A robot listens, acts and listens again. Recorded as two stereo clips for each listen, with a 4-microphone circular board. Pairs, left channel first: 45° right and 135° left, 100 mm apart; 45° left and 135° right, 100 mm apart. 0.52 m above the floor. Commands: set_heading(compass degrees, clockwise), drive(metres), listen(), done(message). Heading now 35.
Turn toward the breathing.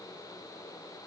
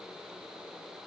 listen()
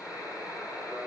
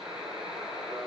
listen()
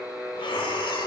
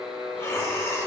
set_heading(55)
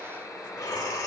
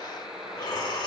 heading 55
done("Facing the breathing, under 1 m away.")